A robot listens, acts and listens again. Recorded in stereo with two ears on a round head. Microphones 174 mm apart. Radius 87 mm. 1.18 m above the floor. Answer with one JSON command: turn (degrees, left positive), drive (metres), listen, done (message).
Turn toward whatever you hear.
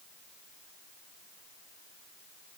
{"listen": true}
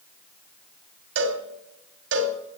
{"turn": -70}
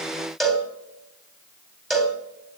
{"done": "Facing the cowbell, 2 to 4 m away."}